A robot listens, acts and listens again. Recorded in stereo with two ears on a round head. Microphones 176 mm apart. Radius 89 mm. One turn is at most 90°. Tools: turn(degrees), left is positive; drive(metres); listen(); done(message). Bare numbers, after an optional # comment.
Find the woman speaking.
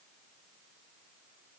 listen()
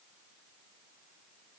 listen()
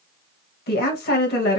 # The woman speaking: about 55° left or 125° left.
turn(55)
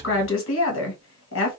# So it is at 70° left.
turn(70)
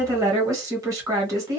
# The woman speaking is now 15° right.
turn(-15)
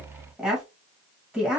done("Facing the woman speaking, 1 to 2 m away.")